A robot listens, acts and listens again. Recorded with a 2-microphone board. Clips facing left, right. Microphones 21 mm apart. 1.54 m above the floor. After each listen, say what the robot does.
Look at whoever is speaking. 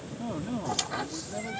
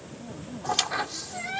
Turn 45° left.
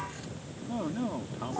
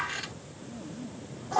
Turn 90° left.
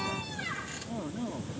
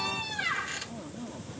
Turn 20° left.
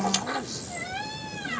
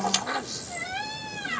Keep listening.
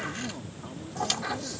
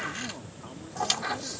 Keep listening.
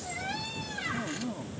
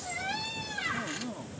Facing the man speaking.